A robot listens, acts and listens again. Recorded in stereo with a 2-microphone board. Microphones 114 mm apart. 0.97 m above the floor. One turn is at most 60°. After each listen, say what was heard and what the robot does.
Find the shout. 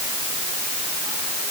Keep listening.
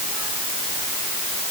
Keep listening.
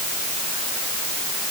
I can't make out a shout to turn to.